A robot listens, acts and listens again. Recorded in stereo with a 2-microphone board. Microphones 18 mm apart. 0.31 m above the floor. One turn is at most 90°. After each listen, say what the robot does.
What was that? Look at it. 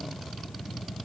Keep listening.
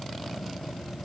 Keep listening.
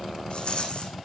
Turn 65° left.
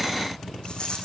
Turn 50° left.
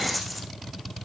Found it: a rattle, straight ahead.